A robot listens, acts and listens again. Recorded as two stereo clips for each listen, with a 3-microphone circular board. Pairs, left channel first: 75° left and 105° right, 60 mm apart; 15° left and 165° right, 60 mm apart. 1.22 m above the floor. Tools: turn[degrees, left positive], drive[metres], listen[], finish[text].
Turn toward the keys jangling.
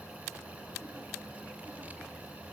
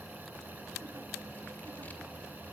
Action: listen[]
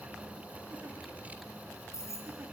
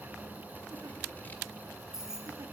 Thought: The keys jangling: 110° left.
Action: turn[110]
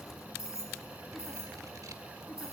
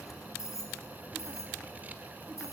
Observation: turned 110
Thought: The keys jangling is now 45° left.
Action: turn[45]
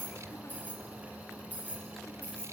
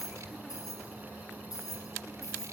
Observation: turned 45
Thought: The keys jangling is now 10° left.
Action: turn[10]
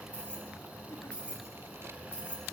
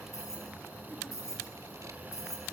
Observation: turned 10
Action: finish[Facing the keys jangling.]